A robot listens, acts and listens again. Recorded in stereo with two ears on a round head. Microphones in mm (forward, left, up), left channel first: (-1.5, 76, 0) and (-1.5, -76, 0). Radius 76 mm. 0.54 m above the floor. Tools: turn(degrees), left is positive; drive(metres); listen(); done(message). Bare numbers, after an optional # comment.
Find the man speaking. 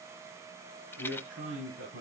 turn(-90)
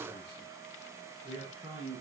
# So it is at 15° right.
turn(-15)
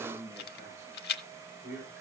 done("Found it: a man speaking, straight ahead, over 4 m away.")